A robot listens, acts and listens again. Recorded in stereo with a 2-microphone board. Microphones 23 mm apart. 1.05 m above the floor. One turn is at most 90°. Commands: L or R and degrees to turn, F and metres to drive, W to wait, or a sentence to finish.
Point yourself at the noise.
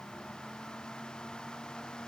W
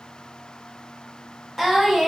R30
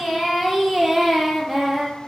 R30
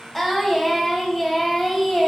L15
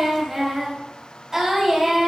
Found it: singing, straight ahead.